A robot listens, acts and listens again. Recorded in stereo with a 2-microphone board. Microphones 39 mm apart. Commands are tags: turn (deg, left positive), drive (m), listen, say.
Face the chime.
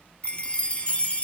<turn deg="35"/>
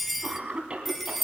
<say>Facing the chime, 1 to 2 m away.</say>